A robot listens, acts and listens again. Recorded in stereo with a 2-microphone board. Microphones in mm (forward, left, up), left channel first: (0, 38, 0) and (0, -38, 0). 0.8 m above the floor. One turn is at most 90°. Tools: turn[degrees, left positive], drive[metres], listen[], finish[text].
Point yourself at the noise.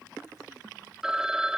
Action: turn[-30]
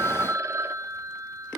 Thought: So it is at 145° right.
Action: turn[-90]
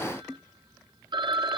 Thought: The phone ringing is now 80° right.
Action: turn[-80]
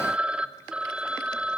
Thought: The phone ringing is now 15° right.
Action: turn[-15]
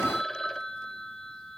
Action: finish[Facing the phone ringing, 1 to 2 m away.]